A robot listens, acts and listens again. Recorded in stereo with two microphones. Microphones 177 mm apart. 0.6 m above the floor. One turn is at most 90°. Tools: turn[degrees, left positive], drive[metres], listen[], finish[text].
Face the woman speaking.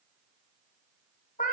Action: listen[]
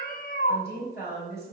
Thought: The woman speaking: about 70° left or 110° left.
Action: turn[70]
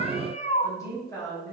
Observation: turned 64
Thought: So it is at 20° left.
Action: turn[20]
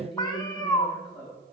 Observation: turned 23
Action: finish[Found it: a woman speaking, straight ahead.]